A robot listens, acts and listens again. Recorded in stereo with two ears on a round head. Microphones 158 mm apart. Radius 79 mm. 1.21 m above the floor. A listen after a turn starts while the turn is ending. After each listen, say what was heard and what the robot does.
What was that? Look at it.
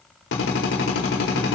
Turn 90° left.
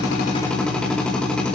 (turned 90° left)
Found it: a drill, straight ahead, over 4 m away.